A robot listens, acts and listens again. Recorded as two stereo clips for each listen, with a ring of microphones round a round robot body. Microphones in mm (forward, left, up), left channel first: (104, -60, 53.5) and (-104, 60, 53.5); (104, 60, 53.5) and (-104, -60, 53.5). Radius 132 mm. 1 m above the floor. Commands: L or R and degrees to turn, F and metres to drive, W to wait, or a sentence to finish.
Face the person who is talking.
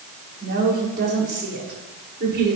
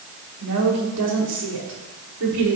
R165
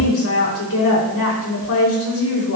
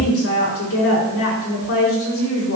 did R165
Found it: a woman speaking, straight ahead, over 4 m away.